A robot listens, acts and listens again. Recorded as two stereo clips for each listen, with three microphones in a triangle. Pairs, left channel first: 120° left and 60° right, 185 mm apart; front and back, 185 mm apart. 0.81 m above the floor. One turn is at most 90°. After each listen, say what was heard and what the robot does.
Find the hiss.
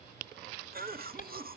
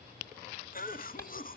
The hiss: 75° left. Turn 75° left.
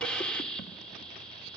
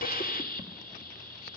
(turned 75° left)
The hiss is now 35° left. Turn 35° left.
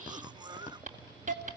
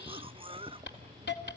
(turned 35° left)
The hiss is now 15° right. Turn 15° right.
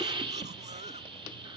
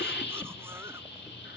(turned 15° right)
Found it: a hiss, straight ahead.